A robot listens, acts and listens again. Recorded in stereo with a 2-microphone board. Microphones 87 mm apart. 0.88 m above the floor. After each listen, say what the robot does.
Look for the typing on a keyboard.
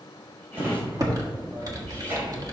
Turn 45° right.
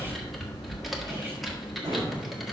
Found it: typing on a keyboard, straight ahead.